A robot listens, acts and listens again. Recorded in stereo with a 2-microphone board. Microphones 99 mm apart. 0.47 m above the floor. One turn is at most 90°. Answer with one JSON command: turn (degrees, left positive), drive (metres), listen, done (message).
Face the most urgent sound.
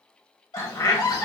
{"turn": 50}
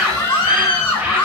{"turn": 75}
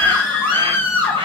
{"turn": 20}
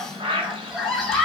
{"done": "Found it: a scream, straight ahead."}